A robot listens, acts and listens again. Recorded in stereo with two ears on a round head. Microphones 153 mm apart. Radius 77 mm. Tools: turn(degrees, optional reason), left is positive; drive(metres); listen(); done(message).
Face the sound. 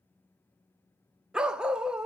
turn(degrees=-30)
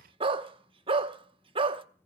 turn(degrees=-145, reason="So it is at 145° right.")
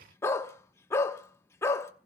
turn(degrees=20, reason="The dog barking is now 20° left.")
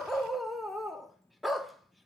done("Found it: a dog barking, straight ahead.")